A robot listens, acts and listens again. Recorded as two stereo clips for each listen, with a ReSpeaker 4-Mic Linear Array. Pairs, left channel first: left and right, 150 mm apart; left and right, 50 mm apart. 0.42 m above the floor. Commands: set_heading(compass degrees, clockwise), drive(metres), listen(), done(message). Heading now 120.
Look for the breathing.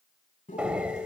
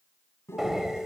set_heading(150)
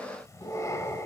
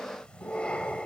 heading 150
set_heading(130)
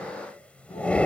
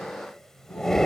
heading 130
set_heading(120)
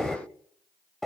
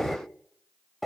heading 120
done("Facing the breathing.")